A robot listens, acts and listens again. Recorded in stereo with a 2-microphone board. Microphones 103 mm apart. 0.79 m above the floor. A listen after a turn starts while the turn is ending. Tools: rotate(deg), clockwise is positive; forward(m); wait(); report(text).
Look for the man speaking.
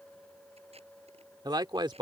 rotate(50)
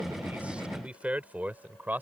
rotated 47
rotate(20)
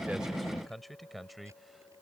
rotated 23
report("Found it: a man speaking, straight ahead.")